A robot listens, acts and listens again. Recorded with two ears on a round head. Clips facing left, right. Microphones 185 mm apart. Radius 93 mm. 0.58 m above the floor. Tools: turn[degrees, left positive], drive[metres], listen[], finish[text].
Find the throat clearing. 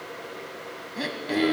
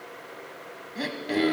Action: turn[30]
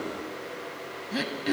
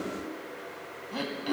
Thought: So it is at 155° left.
Action: turn[155]
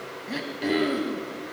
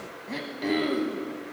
Action: finish[Facing the throat clearing.]